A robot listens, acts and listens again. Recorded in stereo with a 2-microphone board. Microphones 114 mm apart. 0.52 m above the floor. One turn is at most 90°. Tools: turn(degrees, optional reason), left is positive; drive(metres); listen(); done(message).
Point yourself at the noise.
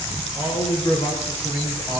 turn(degrees=50, reason="The man speaking: about 50° left or 130° left.")
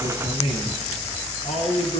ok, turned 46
turn(degrees=70, reason="So it is at 70° left.")
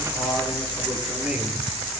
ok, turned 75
listen()
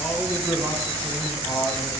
turn(degrees=-15, reason="The man speaking is now 15° right.")
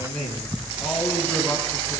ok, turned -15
done("Facing the man speaking.")